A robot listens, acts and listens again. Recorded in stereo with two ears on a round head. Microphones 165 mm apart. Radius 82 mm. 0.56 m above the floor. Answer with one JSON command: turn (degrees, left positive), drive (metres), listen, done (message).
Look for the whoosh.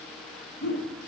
{"turn": 55}
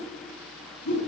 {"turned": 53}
{"turn": 70}
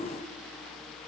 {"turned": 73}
{"listen": true}
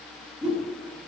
{"done": "Found it: a whoosh, straight ahead."}